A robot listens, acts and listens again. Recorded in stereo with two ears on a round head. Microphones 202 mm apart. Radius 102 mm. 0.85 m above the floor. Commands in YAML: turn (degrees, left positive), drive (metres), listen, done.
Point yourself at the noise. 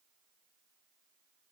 listen: true
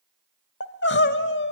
turn: 55
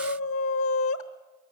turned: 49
turn: 70
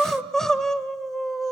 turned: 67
done: "Facing the crying."